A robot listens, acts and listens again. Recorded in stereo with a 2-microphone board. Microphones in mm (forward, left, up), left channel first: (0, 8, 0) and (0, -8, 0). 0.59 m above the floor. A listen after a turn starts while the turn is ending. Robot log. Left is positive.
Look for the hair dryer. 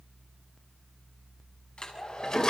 cmd yaw +90
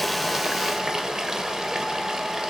cmd idle
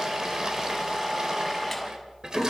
end: Found it: a hair dryer, straight ahead.